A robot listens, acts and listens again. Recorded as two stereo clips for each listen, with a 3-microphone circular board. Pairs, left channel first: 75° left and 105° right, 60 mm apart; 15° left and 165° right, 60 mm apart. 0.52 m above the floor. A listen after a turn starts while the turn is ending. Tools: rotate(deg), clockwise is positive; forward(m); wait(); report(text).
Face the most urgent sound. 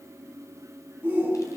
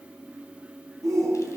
rotate(175)
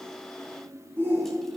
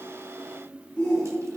rotate(60)
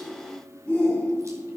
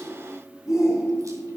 report("Facing the shout.")